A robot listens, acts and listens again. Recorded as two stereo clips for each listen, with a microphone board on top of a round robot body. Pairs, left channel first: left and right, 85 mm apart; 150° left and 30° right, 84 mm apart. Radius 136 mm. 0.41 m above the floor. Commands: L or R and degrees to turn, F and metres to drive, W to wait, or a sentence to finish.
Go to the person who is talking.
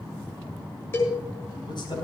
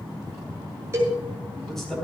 L65
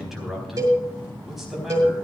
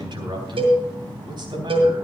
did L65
F1.0
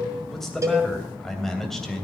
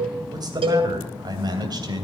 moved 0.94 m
F1.0
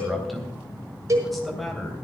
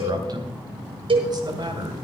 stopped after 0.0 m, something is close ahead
Something is in my way. I am facing the man speaking but have not reached it.